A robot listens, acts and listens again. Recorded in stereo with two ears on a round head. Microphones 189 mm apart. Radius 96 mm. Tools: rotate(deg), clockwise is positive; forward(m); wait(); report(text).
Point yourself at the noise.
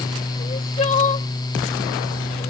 rotate(-30)
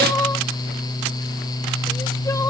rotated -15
rotate(-15)
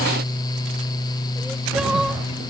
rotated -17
wait()
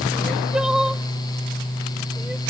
report("Found it: crying, straight ahead.")